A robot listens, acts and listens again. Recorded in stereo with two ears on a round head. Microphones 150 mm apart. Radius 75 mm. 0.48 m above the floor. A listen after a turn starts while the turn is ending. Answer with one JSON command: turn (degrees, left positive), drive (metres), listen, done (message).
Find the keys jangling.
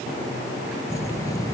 {"turn": 20}
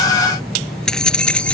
{"turn": 30}
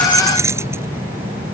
{"turn": -10}
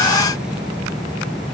{"done": "Facing the keys jangling."}